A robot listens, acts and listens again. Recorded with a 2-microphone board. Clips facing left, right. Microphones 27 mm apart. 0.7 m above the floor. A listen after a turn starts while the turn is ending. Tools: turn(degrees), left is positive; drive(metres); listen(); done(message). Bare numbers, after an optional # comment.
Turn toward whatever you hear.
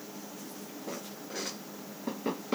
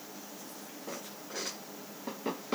listen()
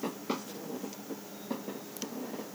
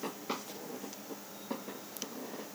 listen()
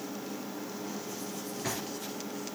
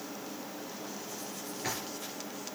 turn(-30)
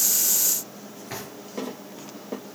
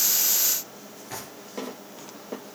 # So it is at 20° left.
turn(20)
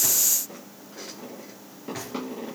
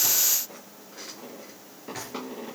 done("Found it: a drawer, straight ahead.")